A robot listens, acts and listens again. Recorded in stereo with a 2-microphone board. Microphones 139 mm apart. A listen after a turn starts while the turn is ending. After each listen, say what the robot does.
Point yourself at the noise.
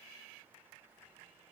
Keep listening.
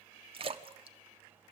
Turn 40° right.
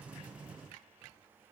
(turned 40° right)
Keep listening.
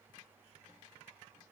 I heard a splash, but can't make it out now. It was about straight ahead or 100° right.